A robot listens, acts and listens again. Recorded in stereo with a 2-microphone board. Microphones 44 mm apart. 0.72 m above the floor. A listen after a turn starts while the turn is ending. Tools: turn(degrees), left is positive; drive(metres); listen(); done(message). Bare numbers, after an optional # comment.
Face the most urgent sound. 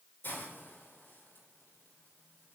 listen()
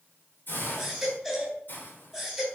turn(30)
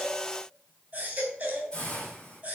# So it is at 35° right.
turn(-35)
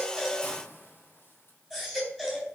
done("Facing the baby crying, 2 to 4 m away.")